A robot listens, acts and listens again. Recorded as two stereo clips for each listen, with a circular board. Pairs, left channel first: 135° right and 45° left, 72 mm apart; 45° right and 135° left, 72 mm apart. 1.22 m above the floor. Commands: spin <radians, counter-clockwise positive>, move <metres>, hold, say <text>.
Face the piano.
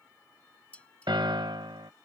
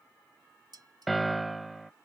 spin 0.79
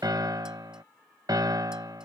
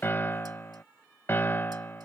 spin 0.26
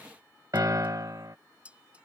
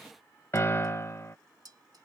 spin 0.17
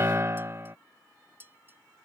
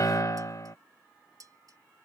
say Facing the piano.